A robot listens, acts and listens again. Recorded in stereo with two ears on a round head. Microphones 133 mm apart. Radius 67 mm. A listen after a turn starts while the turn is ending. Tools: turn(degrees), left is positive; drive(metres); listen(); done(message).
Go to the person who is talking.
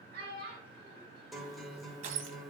turn(degrees=-90)
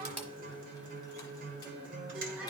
listen()
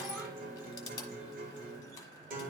listen()
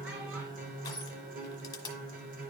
done("I heard a child speaking from this way, but can't make it out now. I did not reach it.")